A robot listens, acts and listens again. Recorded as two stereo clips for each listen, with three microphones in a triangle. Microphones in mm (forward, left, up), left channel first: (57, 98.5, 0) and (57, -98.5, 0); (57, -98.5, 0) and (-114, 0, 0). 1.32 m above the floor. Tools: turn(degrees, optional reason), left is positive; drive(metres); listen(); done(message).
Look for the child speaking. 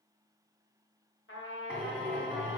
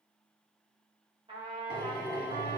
listen()
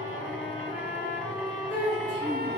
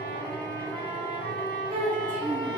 turn(degrees=105, reason="The child speaking: 105° left.")
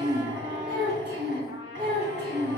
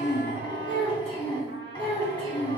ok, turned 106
turn(degrees=-30, reason="The child speaking is now 30° right.")
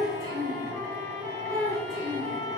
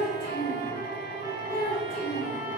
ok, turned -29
done("Found it: a child speaking, straight ahead.")